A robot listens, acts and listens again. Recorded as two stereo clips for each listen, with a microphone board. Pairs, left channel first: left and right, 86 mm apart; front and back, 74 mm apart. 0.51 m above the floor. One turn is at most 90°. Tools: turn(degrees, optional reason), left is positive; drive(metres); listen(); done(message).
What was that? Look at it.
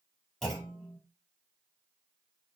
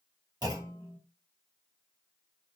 turn(degrees=90, reason="The clunk: 175° left.")
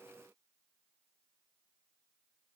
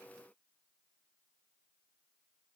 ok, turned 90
turn(degrees=85, reason="Nothing new. It was at 85° left.")
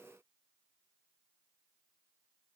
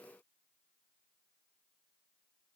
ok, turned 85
done("I heard a clunk from this way, but can't make it out now.")